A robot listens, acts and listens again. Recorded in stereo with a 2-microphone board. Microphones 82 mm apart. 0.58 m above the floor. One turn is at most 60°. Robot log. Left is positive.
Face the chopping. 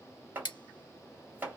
note: The chopping: about 25° right or 155° right.
cmd yaw -25
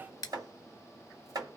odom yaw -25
note: So it is at 130° right.
cmd yaw -60
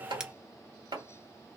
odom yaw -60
note: The chopping is now 70° right.
cmd yaw -60
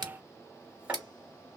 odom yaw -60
note: The chopping is now 15° right.
cmd yaw -15
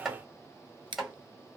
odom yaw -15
end: Found it: chopping, straight ahead.